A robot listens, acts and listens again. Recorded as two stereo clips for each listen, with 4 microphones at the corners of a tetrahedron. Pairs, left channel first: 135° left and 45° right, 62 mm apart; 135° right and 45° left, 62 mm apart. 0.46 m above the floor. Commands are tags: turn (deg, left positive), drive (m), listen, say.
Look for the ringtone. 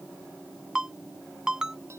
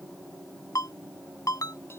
<turn deg="-125"/>
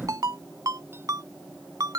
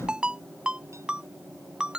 <turn deg="-30"/>
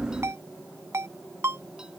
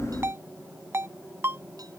<say>Found it: a ringtone, straight ahead.</say>